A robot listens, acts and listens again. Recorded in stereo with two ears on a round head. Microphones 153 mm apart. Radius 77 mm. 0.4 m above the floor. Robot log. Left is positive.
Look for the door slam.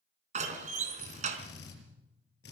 note: The door slam: about 50° right or 130° right.
cmd yaw -50
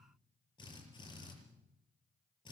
cmd idle
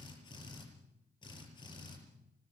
end: I heard a door slam, but can't make it out now. It was about straight ahead or 80° right.